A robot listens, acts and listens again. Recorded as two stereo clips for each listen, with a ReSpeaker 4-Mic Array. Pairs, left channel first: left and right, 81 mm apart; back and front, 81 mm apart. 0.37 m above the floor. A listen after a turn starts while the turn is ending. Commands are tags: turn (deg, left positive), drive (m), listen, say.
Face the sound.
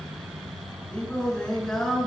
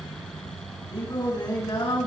<turn deg="170"/>
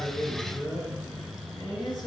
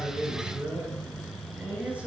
<turn deg="75"/>
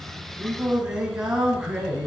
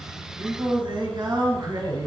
<turn deg="-10"/>
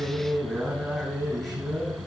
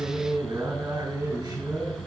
<say>Found it: singing, straight ahead.</say>